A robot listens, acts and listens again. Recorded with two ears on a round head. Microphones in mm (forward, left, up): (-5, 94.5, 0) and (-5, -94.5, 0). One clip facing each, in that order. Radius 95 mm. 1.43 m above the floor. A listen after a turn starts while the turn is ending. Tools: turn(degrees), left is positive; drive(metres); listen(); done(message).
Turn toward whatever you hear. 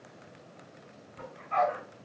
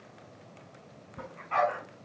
turn(degrees=-70)
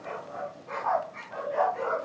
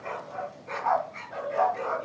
turn(degrees=-25)
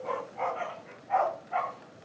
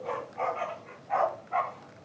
done("Facing the dog barking, over 4 m away.")